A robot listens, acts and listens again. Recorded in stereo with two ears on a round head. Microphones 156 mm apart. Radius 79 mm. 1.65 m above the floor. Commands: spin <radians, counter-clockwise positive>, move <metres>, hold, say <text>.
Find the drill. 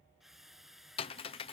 spin 0.52
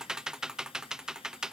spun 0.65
hold
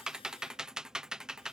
hold
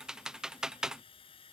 spin 2.53
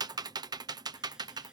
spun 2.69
hold
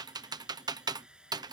say Found it: a drill, straight ahead.